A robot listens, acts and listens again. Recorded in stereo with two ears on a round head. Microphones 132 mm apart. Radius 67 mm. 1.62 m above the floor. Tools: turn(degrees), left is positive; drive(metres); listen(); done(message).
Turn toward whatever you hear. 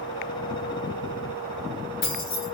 turn(degrees=70)
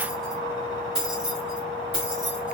turn(degrees=-10)
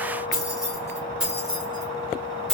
done("Facing the keys jangling.")